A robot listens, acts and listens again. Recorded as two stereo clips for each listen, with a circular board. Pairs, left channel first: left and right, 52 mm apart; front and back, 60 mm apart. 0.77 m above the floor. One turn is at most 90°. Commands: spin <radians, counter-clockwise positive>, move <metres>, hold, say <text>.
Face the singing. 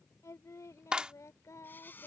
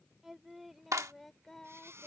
spin 1.40
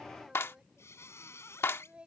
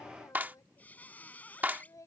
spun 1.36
spin -0.35
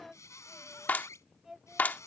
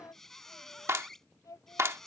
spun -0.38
spin -0.17
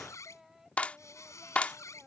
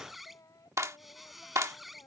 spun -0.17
say Facing the singing.